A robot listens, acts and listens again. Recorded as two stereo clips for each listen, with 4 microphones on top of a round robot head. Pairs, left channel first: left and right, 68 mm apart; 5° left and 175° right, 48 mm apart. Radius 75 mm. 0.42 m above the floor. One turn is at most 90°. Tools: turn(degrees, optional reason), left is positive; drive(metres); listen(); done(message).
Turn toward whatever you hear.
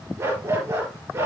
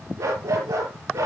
turn(degrees=-90, reason="The dog barking: 150° right.")
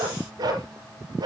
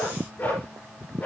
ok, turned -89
turn(degrees=-60, reason="The dog barking is now 60° right.")
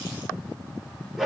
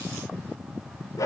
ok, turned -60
done("Found it: a dog barking, straight ahead, over 4 m away.")